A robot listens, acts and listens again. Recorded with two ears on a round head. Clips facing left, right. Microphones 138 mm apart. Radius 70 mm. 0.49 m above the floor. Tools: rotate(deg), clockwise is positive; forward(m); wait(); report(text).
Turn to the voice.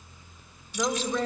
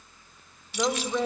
rotate(30)
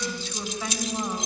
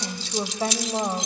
rotate(145)
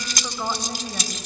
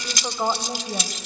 rotate(20)
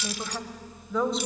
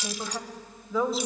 report("Found it: a woman speaking, straight ahead.")